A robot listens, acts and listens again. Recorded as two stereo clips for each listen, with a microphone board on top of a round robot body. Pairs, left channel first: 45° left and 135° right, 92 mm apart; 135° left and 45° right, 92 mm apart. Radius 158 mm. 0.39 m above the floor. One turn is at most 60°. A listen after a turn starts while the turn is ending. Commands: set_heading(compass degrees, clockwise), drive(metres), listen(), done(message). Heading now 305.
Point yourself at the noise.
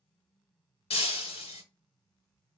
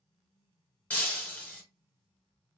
set_heading(245)
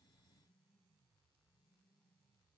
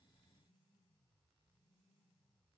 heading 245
done("I heard breaking glass from this way, but can't make it out now.")